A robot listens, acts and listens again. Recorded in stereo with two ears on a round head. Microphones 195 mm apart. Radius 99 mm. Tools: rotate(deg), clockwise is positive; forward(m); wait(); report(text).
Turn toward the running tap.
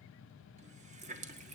rotate(30)
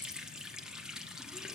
report("Facing the running tap, 1 to 2 m away.")